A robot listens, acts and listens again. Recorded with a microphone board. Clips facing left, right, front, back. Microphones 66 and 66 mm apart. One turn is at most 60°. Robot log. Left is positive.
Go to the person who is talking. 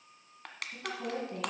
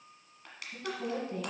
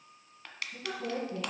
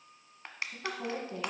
note: The woman speaking: 160° left.
cmd yaw +60
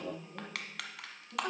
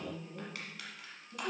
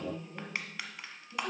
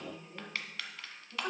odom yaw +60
note: The woman speaking is now 115° left.
cmd yaw +60
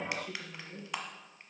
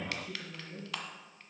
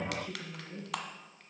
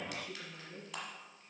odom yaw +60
note: The woman speaking is now 60° left.
cmd yaw +60
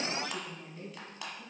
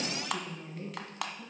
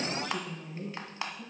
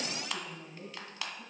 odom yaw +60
note: The woman speaking is now 20° right.
cmd yaw -20
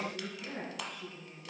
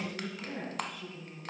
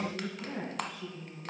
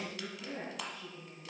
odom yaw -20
cmd fwd 1.0
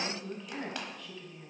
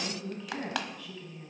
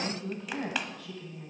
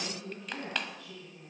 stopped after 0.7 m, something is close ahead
end: Something is in my way. I am facing the woman speaking but have not reached it.